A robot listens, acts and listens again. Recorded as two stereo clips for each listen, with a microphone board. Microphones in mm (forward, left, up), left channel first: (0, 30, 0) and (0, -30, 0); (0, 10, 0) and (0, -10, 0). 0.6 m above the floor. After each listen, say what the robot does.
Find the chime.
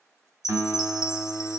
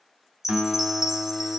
Turn 30° right.
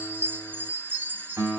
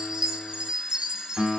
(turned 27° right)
Turn 140° right.
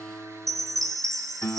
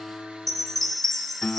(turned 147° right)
Facing the chime.